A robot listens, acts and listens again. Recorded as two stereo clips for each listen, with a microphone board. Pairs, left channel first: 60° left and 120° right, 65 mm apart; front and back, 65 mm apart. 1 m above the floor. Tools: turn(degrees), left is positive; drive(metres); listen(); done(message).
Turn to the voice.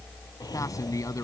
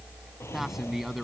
turn(degrees=95)
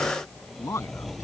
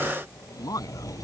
turn(degrees=20)
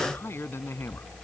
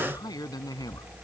done("Facing the man speaking.")